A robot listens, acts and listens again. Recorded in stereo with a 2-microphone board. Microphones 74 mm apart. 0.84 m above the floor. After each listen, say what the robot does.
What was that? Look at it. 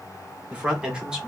Turn 30° right.
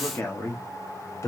Turn 45° left.
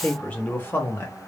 Turn 30° left.
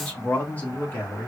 Turn 30° left.
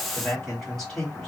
Turn 10° left.
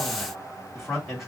Found it: a man speaking, straight ahead, 1 to 2 m away.